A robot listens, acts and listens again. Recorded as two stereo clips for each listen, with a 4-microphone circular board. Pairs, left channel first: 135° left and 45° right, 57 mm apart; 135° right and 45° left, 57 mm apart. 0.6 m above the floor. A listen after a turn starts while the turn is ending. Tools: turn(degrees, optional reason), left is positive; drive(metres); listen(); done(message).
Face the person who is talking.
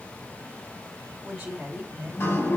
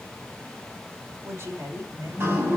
turn(degrees=30, reason="The woman speaking: 30° left.")
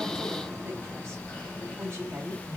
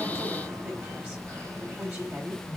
done("Found it: a woman speaking, straight ahead, 2 to 4 m away.")